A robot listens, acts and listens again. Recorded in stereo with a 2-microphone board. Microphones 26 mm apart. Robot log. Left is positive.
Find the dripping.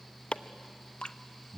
note: The dripping: about 35° left or 145° left.
cmd yaw +35
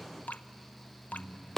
note: So it is at 105° left.
cmd yaw +105
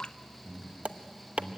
note: The dripping is now 40° left.
cmd yaw +40
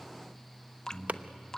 note: The dripping is now 25° left.
cmd yaw +25
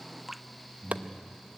end: Found it: dripping, straight ahead, under 1 m away.